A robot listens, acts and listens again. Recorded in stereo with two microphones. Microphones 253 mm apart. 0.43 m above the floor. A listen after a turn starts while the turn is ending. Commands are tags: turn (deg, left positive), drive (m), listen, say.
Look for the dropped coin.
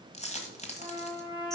<turn deg="25"/>
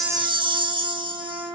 <listen/>
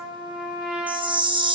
<say>I heard a dropped coin, but can't make it out now. It was about straight ahead or 130° left.</say>